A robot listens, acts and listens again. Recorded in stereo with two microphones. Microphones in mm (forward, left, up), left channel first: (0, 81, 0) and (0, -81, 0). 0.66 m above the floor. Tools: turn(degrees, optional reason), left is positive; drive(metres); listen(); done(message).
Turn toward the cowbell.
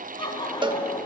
turn(degrees=-30, reason="The cowbell: about 30° right or 150° right.")
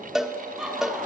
done("Facing the cowbell.")